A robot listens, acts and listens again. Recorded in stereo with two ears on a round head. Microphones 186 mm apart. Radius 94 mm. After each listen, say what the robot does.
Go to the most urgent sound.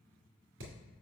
Keep listening.
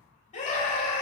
Turn 40° left.
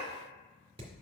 Keep listening.
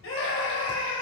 Turn 100° left.
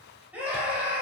Drive 1.0 m forward.
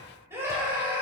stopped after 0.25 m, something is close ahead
Turn 15° right.
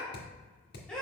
Blocked. The scream is further on, straight ahead.